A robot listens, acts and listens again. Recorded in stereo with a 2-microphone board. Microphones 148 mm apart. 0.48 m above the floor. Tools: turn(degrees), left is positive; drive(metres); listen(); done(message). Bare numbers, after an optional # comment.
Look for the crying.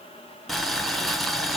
listen()
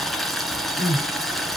# The crying: about 65° left or 115° left.
turn(65)
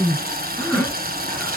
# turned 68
done("Facing the crying.")